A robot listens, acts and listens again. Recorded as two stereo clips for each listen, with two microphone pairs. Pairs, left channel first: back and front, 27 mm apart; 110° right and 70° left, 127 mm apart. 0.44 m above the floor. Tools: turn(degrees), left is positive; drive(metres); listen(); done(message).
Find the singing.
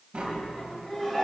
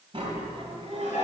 turn(degrees=100)
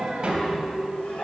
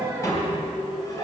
turn(degrees=-10)
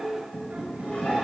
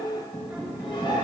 turn(degrees=-10)
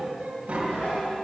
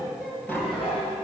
turn(degrees=-15)
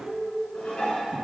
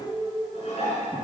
turn(degrees=-10)
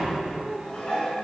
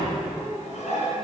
listen()
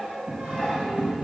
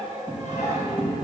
listen()
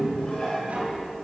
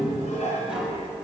done("I heard singing from this way, but can't make it out now.")